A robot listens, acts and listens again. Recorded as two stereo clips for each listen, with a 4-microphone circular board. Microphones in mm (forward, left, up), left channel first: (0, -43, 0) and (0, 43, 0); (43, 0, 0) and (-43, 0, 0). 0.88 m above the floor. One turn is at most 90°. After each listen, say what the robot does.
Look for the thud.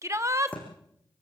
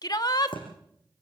Turn 15° right.
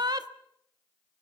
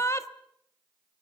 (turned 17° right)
Facing where the thud came from. I can't hear it now.